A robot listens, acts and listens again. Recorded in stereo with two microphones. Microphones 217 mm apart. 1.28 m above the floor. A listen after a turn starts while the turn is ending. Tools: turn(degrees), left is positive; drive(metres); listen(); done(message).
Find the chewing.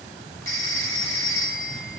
listen()
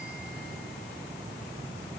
listen()
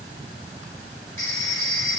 done("I can't make out chewing to turn to.")